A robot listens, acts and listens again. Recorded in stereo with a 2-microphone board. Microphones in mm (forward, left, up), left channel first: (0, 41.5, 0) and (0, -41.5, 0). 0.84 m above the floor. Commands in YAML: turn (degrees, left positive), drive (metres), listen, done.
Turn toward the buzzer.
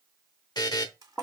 turn: 55
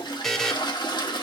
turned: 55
done: "Found it: a buzzer, straight ahead, under 1 m away."